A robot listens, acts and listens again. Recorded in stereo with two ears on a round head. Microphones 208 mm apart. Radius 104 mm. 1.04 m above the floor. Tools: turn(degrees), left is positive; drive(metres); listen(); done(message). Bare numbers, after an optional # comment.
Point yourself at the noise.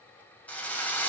turn(30)
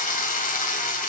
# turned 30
# So it is at 145° left.
turn(145)
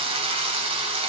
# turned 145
# The drill is now 25° right.
turn(-25)
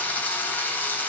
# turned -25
# The drill is now 10° left.
turn(10)
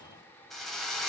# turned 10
done("Found it: a drill, straight ahead.")